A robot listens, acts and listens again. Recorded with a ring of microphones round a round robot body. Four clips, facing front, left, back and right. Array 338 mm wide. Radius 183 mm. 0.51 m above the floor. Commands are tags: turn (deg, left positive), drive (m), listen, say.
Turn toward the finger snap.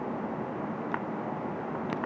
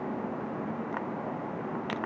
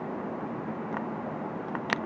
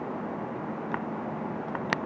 <listen/>
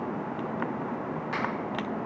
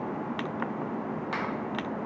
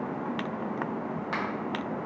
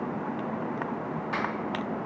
<turn deg="110"/>
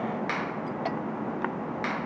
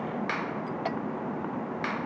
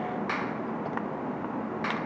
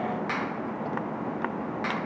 <turn deg="45"/>
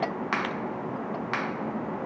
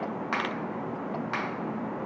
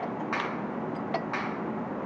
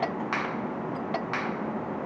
<say>Found it: a finger snap, straight ahead.</say>